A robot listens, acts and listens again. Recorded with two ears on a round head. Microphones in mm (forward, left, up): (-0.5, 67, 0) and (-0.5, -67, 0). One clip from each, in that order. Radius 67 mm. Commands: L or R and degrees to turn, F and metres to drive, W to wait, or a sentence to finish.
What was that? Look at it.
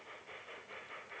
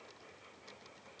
W
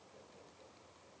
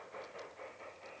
W
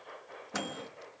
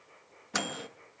R35
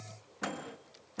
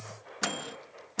R105
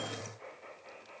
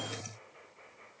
W
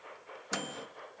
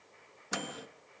Found it: a microwave, straight ahead, under 1 m away.